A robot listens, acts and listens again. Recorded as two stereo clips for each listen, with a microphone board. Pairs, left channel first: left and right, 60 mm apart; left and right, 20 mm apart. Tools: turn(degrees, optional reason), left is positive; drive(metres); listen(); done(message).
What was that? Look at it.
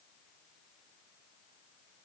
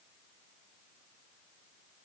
listen()
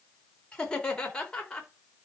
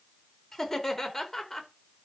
turn(degrees=30)
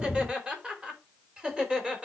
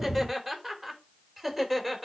turn(degrees=-15, reason="So it is at 15° right.")
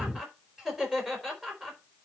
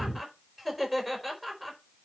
turn(degrees=-10, reason="The laughter is now 10° right.")
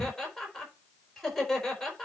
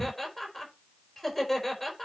done("Facing the laughter, over 4 m away.")